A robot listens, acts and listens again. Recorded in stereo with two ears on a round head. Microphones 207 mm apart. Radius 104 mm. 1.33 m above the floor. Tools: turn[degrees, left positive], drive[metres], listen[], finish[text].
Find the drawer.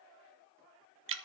Action: listen[]
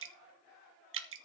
Action: listen[]
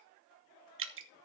Action: finish[I can't make out a drawer, only dripping.]